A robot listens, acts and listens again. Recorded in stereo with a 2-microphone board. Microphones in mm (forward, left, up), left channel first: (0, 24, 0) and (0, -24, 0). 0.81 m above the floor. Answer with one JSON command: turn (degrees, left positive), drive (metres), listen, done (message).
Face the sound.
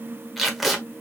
{"turn": 30}
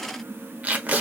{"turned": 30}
{"turn": -35}
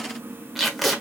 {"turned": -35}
{"done": "Found it: tape being pulled, straight ahead."}